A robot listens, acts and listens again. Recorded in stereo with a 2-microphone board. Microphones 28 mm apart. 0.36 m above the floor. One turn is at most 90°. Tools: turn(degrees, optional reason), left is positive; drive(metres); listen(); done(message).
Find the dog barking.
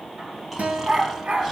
turn(degrees=-55, reason="The dog barking: about 55° right or 125° right.")
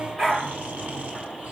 turn(degrees=-10, reason="So it is at 10° right.")
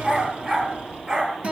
turn(degrees=-30, reason="The dog barking is now 30° right.")
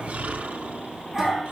turn(degrees=-10, reason="The dog barking is now 10° right.")
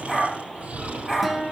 done("Facing the dog barking.")